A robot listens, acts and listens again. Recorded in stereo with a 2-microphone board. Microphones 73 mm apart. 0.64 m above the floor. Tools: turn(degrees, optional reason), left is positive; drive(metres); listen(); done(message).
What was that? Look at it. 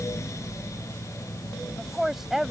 turn(degrees=-30)
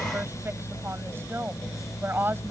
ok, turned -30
turn(degrees=-145, reason="So it is at 145° right.")
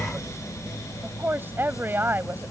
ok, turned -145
turn(degrees=-30, reason="The woman speaking is now 30° right.")
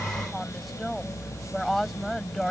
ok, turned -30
done("Facing the woman speaking.")